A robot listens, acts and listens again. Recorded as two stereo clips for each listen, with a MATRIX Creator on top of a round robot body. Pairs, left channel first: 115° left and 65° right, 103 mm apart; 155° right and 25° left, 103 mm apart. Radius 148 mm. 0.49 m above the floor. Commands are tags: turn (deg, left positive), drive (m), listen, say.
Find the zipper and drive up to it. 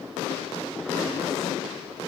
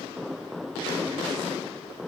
<listen/>
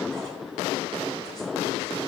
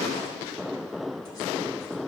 <listen/>
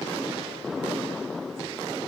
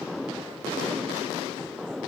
<say>I can't make out a zipper.</say>